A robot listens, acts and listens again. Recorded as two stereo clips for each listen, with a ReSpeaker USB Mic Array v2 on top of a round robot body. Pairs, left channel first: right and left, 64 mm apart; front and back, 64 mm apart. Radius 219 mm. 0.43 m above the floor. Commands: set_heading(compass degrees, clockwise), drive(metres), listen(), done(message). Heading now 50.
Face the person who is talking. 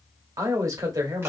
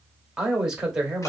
set_heading(310)
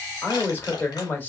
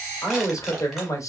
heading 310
set_heading(340)
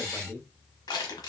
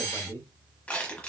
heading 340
set_heading(350)
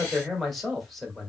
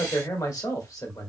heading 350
done("Found it: a man speaking, straight ahead.")